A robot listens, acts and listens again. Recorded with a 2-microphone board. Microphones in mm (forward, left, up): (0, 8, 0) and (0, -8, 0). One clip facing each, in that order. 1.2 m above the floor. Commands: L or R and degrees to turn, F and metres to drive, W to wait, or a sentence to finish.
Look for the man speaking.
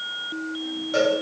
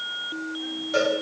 W
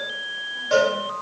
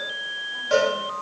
W
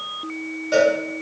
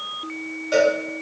I can't make out a man speaking, only a cowbell.